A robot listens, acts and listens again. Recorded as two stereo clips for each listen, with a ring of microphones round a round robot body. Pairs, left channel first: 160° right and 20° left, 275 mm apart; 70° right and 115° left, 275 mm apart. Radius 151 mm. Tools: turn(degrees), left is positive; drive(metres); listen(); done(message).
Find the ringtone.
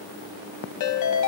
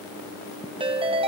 turn(degrees=-175)
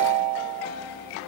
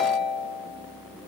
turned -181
done("Found it: a ringtone, straight ahead, 1 to 2 m away.")